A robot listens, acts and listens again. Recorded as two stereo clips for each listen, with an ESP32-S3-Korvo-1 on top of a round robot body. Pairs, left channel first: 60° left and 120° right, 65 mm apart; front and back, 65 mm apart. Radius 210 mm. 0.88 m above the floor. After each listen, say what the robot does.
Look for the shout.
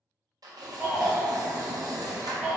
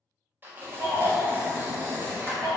Turn 165° left.
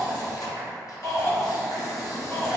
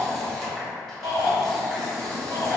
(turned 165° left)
Turn 10° left.
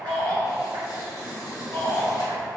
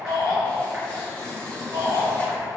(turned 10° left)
Found it: a shout, straight ahead.